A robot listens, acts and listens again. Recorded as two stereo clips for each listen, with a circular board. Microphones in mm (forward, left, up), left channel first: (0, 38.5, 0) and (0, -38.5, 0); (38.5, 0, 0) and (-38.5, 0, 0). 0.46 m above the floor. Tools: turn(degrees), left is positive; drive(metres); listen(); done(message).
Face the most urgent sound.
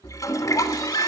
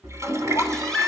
turn(degrees=80)
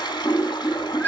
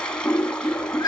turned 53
turn(degrees=25)
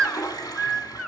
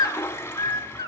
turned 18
turn(degrees=10)
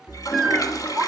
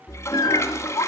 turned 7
done("Facing the baby crying, under 1 m away.")